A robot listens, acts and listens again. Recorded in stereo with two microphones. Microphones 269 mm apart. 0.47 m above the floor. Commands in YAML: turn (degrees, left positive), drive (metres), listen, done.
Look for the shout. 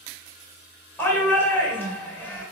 turn: 30
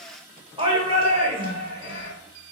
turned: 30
turn: -25
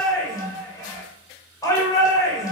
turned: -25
turn: 15
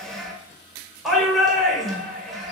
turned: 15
done: "Found it: a shout, straight ahead."